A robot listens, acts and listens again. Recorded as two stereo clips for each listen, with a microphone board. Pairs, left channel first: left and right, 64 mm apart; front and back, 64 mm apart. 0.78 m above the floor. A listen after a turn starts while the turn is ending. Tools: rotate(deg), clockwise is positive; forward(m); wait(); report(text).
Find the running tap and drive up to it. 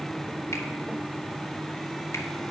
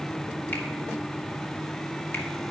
wait()
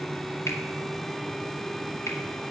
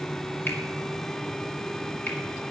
wait()
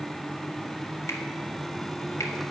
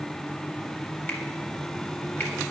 report("I can't make out a running tap to turn to.")